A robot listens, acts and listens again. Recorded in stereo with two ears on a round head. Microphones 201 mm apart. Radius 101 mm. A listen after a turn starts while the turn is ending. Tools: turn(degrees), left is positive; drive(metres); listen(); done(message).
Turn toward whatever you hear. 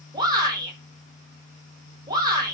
turn(degrees=-20)
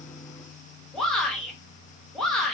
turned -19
done("Found it: a shout, straight ahead, 1 to 2 m away.")